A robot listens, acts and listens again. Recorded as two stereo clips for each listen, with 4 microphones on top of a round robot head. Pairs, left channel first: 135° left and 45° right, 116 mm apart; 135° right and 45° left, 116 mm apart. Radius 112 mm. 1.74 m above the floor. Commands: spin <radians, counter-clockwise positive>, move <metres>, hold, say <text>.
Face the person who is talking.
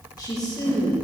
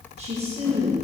spin 1.31
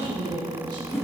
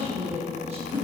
spin 0.17
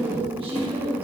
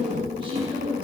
say Facing the woman speaking.